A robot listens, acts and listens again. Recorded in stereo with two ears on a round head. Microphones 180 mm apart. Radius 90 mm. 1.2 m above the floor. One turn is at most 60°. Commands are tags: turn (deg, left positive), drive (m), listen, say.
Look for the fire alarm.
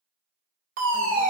<turn deg="-40"/>
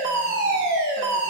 <turn deg="-60"/>
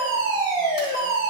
<turn deg="-30"/>
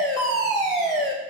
<say>Found it: a fire alarm, straight ahead.</say>